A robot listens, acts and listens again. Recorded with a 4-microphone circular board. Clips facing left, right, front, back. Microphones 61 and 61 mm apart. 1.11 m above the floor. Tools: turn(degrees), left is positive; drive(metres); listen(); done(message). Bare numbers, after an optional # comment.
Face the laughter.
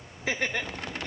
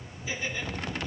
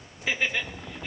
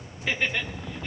# The laughter: 85° left.
turn(85)
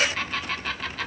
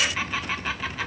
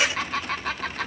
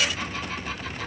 # The laughter is now 10° right.
turn(-10)
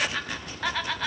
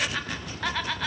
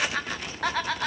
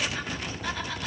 done("Found it: laughter, straight ahead.")